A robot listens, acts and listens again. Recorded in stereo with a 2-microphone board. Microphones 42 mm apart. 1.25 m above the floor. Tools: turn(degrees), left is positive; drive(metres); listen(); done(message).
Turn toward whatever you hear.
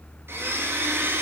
turn(degrees=-70)
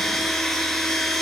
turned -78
turn(degrees=10)
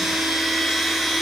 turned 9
done("Found it: a blender, straight ahead, 2 to 4 m away.")